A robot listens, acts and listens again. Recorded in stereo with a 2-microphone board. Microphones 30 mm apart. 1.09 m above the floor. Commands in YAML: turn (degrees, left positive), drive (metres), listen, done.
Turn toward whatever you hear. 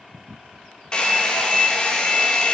turn: 25
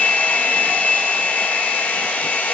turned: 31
turn: 125
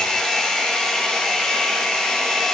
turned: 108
turn: 20
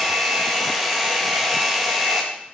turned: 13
done: "Found it: a hair dryer, straight ahead, 1 to 2 m away."